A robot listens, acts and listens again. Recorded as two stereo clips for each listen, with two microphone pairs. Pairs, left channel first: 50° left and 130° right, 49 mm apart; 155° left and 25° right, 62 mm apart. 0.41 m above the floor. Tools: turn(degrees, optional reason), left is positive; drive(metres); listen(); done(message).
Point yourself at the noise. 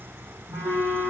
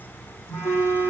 turn(degrees=-160, reason="The phone buzzing: 160° right.")
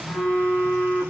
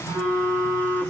turn(degrees=-10, reason="The phone buzzing is now 10° right.")
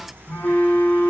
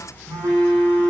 done("Found it: a phone buzzing, straight ahead, 2 to 4 m away.")